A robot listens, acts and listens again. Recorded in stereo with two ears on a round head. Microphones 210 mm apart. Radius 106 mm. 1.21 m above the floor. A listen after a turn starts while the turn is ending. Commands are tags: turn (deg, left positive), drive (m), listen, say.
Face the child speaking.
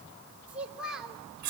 <turn deg="30"/>
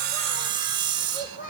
<turn deg="140"/>
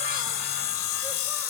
<listen/>
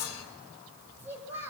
<turn deg="-10"/>
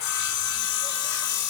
<listen/>
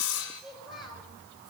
<say>Facing the child speaking.</say>